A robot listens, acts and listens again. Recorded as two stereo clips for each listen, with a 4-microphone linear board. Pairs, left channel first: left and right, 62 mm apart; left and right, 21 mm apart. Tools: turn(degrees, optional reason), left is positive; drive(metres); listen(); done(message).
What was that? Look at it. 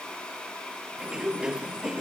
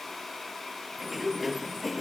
turn(degrees=-30)
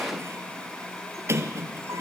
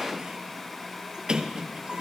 turn(degrees=-135, reason="So it is at 135° right.")
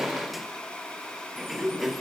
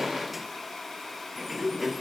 done("Facing the sliding door, 1 to 2 m away.")